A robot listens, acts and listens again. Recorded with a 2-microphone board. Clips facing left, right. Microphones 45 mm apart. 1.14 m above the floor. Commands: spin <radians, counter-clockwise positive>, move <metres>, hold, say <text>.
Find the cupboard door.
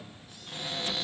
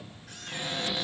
spin -0.52
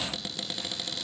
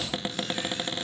spin -2.44
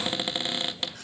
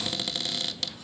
spin 0.52
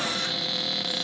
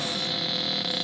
say Found it: a cupboard door, straight ahead.